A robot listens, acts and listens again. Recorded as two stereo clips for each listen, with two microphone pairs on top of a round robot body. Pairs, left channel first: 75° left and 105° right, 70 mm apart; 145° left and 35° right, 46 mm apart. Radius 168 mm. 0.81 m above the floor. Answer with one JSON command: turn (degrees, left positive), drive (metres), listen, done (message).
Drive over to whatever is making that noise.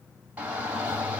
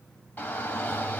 {"turn": -175}
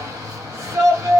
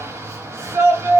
{"turn": -55}
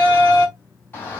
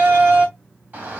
{"turn": 10}
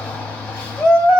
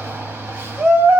{"drive": 1.0}
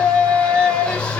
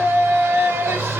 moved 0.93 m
{"drive": 1.0}
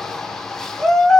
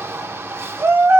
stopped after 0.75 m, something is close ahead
{"done": "I am next to the shout."}